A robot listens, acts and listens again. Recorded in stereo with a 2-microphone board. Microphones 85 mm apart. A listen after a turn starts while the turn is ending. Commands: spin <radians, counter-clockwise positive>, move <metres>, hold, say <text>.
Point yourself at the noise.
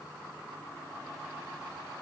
hold
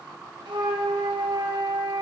spin -1.57
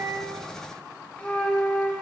spin 0.26
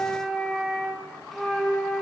say Facing the flute, 2 to 4 m away.